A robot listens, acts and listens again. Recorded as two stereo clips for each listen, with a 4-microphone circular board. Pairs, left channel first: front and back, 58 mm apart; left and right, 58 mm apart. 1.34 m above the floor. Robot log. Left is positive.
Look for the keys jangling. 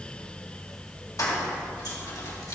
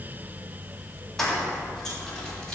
end: Facing the keys jangling, 2 to 4 m away.